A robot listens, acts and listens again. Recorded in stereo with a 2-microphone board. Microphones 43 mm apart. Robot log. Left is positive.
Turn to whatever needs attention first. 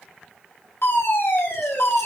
note: The fire alarm: about 60° left or 120° left.
cmd yaw +60
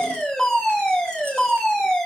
note: So it is at 15° left.
cmd yaw +15
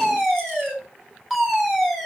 end: Facing the fire alarm.